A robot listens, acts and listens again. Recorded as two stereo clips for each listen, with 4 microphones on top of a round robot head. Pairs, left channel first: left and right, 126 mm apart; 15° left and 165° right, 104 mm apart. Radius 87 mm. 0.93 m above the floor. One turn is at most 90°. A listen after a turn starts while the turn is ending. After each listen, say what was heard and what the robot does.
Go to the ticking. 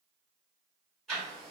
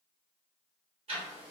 The ticking: 175° left. Turn 90° left.
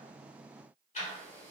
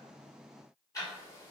The ticking is now 65° left. Turn 65° left.
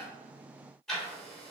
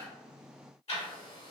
Drive 1.0 m forward.
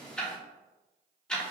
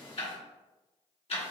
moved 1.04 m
The ticking is now 10° left. Turn 10° left.
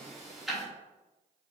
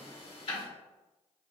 Drive 1.0 m forward.
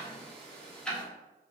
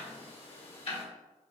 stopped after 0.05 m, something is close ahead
The ticking is now 10° left. Turn 10° left.
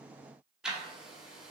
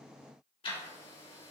I am next to the ticking.